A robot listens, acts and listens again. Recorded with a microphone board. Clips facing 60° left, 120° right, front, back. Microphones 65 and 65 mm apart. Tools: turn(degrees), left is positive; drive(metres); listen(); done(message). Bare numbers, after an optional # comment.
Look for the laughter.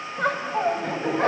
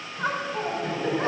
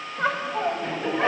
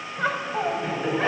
# The laughter: 90° left.
turn(90)
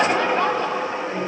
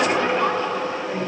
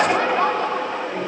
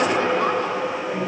# The laughter is now 20° left.
turn(20)
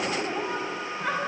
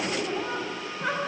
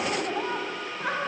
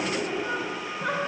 done("Found it: laughter, straight ahead, 2 to 4 m away.")